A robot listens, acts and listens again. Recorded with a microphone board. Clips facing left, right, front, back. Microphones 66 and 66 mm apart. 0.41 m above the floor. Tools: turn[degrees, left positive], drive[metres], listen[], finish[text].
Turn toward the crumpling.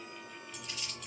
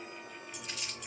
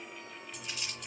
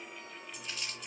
Thought: The crumpling: 80° right.
Action: turn[-80]
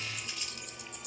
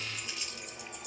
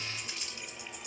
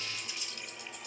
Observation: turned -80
Action: finish[Facing the crumpling.]